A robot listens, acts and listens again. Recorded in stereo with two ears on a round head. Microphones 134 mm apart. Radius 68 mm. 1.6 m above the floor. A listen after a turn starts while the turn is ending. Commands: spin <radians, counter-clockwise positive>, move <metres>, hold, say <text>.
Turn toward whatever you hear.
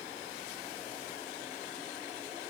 hold
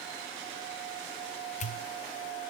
spin 0.87
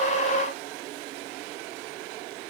hold
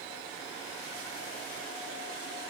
say I heard a pop, but can't make it out now. It was about straight ahead or 80° left.